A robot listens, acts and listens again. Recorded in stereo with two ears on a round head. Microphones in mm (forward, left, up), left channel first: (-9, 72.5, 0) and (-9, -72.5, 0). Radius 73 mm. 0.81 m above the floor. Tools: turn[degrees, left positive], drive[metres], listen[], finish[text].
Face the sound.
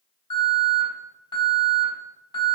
Thought: The alarm: about 25° left or 155° left.
Action: turn[25]
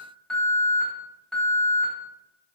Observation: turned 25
Action: finish[Facing the alarm.]